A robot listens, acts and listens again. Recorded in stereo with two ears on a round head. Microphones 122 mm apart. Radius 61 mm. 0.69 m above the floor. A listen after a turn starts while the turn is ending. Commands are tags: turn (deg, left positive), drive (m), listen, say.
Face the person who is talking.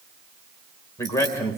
<turn deg="20"/>
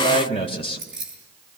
<turn deg="140"/>
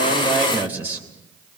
<turn deg="-15"/>
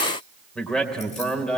<say>Facing the man speaking.</say>